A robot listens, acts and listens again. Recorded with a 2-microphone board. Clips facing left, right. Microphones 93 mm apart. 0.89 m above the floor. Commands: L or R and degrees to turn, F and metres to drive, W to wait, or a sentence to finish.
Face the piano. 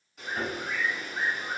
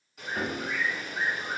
R65
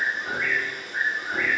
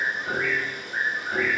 Found it: a piano, straight ahead.